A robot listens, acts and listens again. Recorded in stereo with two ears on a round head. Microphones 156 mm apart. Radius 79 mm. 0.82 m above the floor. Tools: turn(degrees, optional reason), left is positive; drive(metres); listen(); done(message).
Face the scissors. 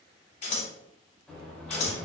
turn(degrees=40, reason="The scissors: about 40° left or 140° left.")
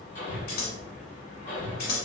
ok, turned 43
turn(degrees=85, reason="So it is at 85° left.")
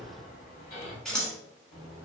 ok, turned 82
done("Found it: scissors, straight ahead.")